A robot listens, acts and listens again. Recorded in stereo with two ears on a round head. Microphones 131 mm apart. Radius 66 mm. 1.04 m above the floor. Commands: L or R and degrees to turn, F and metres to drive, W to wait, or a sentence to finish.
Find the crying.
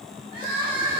R35
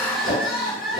Facing the crying, 1 to 2 m away.